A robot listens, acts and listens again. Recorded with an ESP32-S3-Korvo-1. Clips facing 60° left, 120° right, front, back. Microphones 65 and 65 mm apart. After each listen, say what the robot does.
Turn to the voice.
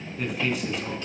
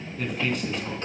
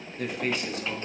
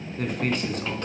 Turn 145° left.
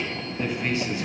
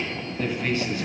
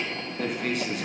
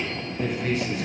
Turn 10° right.
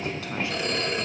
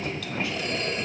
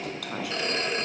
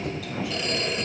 Keep listening.
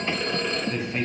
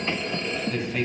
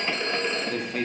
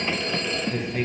Facing the man speaking, 2 to 4 m away.